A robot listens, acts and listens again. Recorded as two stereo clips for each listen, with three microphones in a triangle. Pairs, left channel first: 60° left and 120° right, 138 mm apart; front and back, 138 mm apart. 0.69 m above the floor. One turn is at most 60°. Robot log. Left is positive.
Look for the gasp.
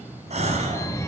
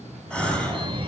note: The gasp: 80° right.
cmd yaw -60
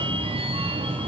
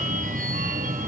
note: Nothing new. It was at 20° right.
cmd yaw -20
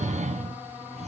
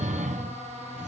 end: I heard a gasp from this way, but can't make it out now.